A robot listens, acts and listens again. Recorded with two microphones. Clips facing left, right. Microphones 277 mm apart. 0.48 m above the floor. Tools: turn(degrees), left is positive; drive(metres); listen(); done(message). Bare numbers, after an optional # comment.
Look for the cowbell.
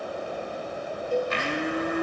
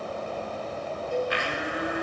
# The cowbell: about 45° left or 135° left.
turn(45)
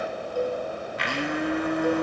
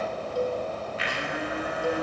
done("Found it: a cowbell, straight ahead.")